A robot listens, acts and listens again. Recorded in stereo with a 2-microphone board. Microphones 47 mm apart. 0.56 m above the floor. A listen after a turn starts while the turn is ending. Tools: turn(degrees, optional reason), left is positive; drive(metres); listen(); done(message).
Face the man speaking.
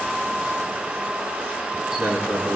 turn(degrees=-70, reason="The man speaking: about 70° right or 110° right.")
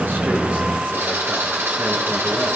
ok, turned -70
listen()
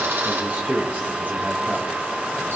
turn(degrees=-45, reason="So it is at 45° right.")
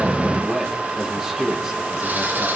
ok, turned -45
turn(degrees=-10, reason="The man speaking is now 10° right.")
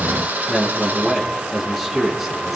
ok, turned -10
done("Facing the man speaking.")